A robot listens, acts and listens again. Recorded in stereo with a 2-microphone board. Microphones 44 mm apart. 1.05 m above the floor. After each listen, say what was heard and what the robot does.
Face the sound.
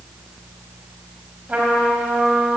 The trumpet: about 30° right or 150° right. Turn 30° right.
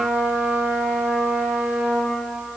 So it is at 120° right. Turn 120° right.
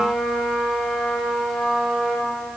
The trumpet is now 10° right. Turn 10° right.
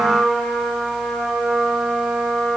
Found it: a trumpet, straight ahead.